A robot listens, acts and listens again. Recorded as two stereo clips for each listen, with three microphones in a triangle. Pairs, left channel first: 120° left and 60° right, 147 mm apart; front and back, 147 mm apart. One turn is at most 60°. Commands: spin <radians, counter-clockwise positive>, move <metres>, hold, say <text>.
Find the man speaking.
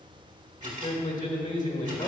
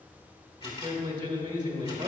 spin 1.05
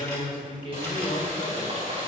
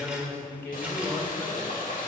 spin 1.05
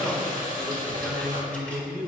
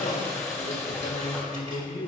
spin 0.26
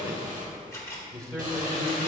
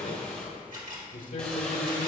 say Facing the man speaking, 1 to 2 m away.